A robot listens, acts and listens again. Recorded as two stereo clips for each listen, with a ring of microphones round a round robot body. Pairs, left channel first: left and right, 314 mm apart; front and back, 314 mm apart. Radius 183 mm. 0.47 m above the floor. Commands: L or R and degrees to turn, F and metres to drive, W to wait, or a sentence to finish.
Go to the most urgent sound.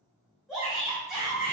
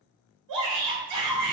L180
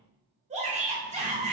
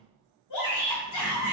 R25
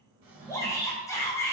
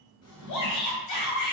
L10
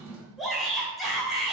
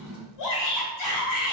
F1.0
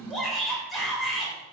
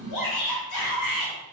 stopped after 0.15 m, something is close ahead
Something is in my way. I am facing the shout but have not reached it.